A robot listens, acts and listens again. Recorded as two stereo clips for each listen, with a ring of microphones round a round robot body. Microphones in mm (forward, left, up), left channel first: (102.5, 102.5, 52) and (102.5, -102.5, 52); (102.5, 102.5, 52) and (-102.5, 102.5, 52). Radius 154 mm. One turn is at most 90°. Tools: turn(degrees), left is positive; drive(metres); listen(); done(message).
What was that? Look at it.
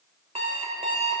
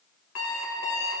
turn(degrees=-30)
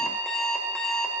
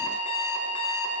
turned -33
done("Facing the alarm clock, 2 to 4 m away.")